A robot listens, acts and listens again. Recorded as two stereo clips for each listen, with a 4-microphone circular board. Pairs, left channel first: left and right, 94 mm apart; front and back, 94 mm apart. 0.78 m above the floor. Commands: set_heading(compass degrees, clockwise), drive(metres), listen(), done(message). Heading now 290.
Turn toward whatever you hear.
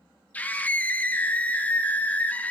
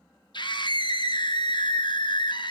set_heading(270)
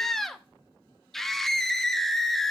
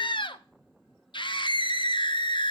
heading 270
done("Found it: a scream, straight ahead, under 1 m away.")